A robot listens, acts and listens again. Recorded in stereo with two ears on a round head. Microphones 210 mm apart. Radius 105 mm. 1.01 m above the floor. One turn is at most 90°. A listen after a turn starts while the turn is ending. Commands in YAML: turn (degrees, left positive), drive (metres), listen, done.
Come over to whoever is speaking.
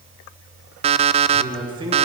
turn: -20
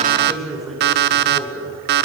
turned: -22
drive: 1.0
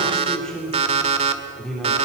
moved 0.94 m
drive: 1.0
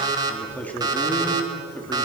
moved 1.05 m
drive: 1.0
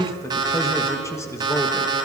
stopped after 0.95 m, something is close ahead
turn: 15
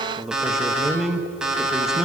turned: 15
done: "Arrived at the man speaking, straight ahead."